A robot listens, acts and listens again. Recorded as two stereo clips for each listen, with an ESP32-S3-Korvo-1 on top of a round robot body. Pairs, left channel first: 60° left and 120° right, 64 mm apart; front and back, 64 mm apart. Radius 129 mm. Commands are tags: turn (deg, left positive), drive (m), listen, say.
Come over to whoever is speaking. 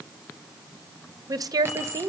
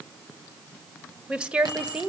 <turn deg="-105"/>
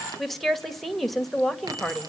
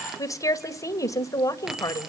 <turn deg="-30"/>
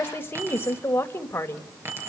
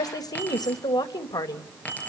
<drive m="1.0"/>
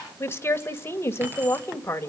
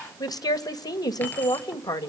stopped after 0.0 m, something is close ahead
<say>Something is in my way. I am facing the woman speaking but have not reached it.</say>